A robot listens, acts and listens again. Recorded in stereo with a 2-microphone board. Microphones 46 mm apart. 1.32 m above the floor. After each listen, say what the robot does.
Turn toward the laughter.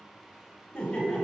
Turn 30° left.
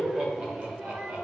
Turn 30° right.
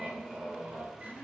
Turn 35° right.
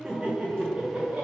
Turn 30° right.
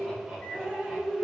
Found it: laughter, straight ahead, 2 to 4 m away.